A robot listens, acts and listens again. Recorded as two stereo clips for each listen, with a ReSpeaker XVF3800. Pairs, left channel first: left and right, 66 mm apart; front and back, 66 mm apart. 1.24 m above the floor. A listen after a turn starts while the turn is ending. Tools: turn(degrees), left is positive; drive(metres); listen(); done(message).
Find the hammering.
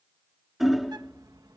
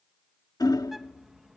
done("Found it: hammering, straight ahead.")